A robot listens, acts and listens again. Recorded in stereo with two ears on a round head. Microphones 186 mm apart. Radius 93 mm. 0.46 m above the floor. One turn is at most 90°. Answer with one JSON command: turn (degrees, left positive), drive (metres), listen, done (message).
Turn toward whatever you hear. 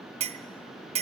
{"turn": -30}
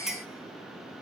{"done": "Facing the clink."}